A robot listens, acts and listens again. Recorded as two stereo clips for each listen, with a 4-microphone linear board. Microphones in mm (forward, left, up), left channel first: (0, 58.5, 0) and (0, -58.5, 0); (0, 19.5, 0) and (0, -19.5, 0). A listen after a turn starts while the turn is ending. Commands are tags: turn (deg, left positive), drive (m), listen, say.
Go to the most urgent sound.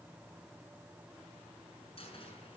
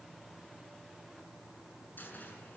<listen/>
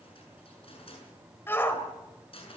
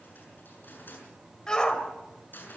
<turn deg="20"/>
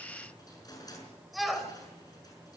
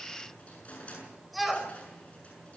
<drive m="1.0"/>
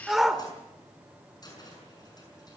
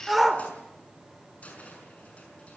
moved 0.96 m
<drive m="1.0"/>
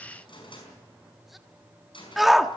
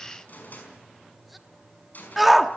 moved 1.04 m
<drive m="1.0"/>
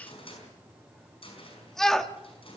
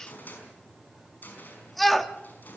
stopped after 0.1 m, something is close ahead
<say>Arrived at the shout, straight ahead.</say>